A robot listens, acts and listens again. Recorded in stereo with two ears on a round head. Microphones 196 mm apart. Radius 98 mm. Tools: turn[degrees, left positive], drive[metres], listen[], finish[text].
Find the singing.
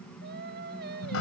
Thought: The singing: about 50° right or 130° right.
Action: turn[-50]
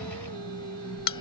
Thought: So it is at 80° right.
Action: turn[-80]
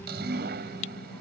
Action: listen[]
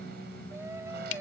Thought: The singing is now 15° right.
Action: turn[-15]
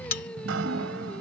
Action: finish[Facing the singing.]